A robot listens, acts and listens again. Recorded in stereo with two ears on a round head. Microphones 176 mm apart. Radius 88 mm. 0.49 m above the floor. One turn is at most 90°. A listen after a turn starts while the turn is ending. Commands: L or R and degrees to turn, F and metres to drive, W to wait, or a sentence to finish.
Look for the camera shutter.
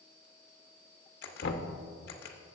L50
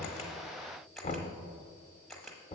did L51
Found it: a camera shutter, straight ahead, under 1 m away.